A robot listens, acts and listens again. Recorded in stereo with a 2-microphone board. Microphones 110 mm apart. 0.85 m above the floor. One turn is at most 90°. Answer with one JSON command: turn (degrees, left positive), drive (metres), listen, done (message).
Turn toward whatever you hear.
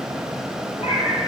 {"turn": 70}
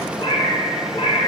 {"turn": 55}
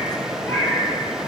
{"turn": 15}
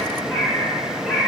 {"done": "Found it: a cat meowing, straight ahead."}